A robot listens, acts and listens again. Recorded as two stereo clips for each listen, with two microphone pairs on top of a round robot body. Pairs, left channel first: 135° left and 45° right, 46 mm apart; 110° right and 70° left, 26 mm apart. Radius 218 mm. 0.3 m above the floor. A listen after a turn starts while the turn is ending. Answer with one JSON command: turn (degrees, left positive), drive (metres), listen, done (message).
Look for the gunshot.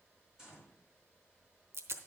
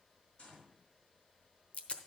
{"turn": -125}
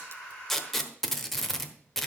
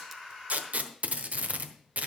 {"done": "Facing where the gunshot came from. I can't hear it now."}